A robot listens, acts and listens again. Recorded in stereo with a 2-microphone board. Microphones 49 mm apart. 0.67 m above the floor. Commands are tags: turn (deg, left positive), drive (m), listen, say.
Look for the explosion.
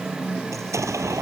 <turn deg="-90"/>
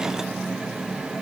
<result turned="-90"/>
<say>I heard an explosion from this way, but can't make it out now.</say>